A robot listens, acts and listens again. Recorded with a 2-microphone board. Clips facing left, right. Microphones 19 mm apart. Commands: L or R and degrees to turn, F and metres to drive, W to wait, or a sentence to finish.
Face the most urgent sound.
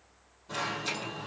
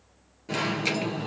R65
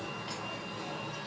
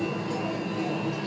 R50
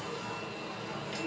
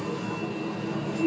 Found it: an alarm, straight ahead, 2 to 4 m away.